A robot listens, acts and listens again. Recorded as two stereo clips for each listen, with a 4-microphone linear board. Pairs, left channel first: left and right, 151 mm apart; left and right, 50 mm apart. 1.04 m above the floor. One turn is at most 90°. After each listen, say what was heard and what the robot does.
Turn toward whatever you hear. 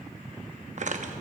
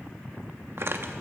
The tearing paper: about 60° right or 120° right. Turn 60° right.
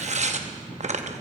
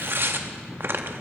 So it is at 55° right. Turn 55° right.
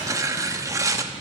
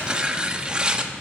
The tearing paper is now 25° right. Turn 25° right.
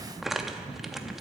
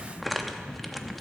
Found it: tearing paper, straight ahead.